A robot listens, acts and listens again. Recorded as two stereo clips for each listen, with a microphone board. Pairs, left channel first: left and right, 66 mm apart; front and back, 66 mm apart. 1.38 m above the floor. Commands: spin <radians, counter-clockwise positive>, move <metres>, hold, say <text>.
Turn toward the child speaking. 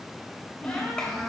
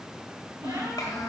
spin 0.17
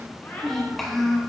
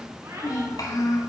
say Facing the child speaking.